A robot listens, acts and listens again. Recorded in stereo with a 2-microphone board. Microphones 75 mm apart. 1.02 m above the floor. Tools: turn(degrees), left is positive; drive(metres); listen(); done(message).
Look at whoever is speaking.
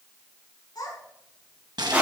turn(degrees=60)
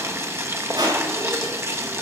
listen()
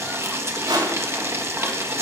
listen()
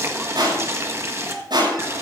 done("Found it: a child speaking, straight ahead, over 4 m away.")